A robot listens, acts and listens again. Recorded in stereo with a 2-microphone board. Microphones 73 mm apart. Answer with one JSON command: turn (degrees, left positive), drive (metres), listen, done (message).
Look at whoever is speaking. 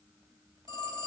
{"listen": true}
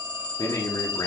{"turn": 55}
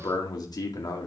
{"turn": 65}
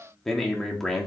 {"done": "Found it: a man speaking, straight ahead, 2 to 4 m away."}